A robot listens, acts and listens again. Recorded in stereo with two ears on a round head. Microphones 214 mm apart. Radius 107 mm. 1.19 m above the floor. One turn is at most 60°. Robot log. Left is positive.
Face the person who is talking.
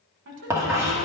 note: The woman speaking: about 50° right or 130° right.
cmd yaw -50
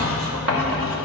cmd idle
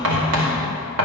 cmd idle
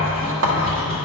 end: I heard a woman speaking, but can't make it out now. It was about straight ahead or 80° right.